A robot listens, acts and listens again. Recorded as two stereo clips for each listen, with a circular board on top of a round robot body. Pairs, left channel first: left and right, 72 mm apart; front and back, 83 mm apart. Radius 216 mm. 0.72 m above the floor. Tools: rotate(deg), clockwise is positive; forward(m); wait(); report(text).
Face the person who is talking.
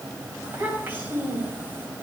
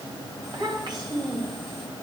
rotate(150)
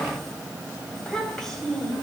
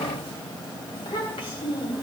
report("Facing the child speaking, over 4 m away.")